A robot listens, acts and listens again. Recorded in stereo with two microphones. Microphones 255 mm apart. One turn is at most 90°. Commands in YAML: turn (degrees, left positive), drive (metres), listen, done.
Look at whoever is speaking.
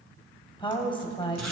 turn: 20
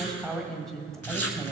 done: "Found it: a woman speaking, straight ahead, 1 to 2 m away."